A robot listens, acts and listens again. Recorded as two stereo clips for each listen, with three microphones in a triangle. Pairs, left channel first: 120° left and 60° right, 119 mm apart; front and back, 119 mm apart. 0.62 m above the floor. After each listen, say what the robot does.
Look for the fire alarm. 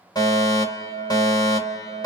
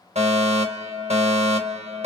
Turn 175° left.
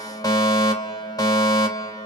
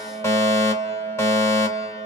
Turn 65° left.
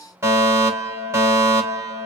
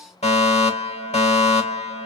Found it: a fire alarm, straight ahead.